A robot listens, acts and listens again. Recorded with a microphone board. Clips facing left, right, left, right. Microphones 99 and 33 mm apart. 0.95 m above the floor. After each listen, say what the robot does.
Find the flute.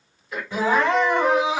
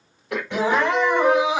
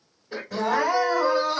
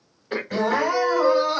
Turn 15° right.
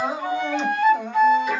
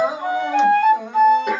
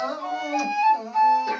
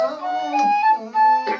Turn 150° right.
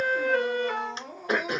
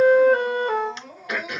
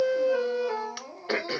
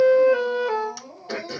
Turn 50° right.
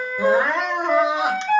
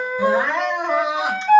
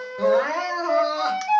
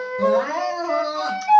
Turn 15° right.
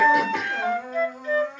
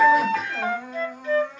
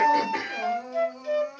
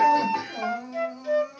Facing the flute, 1 to 2 m away.